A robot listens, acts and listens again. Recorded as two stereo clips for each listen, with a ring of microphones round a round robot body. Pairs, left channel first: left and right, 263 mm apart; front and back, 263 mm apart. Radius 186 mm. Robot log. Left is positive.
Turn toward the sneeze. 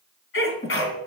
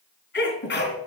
note: The sneeze: 55° left.
cmd yaw +55
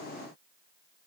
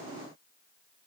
end: Facing where the sneeze came from. I can't hear it now.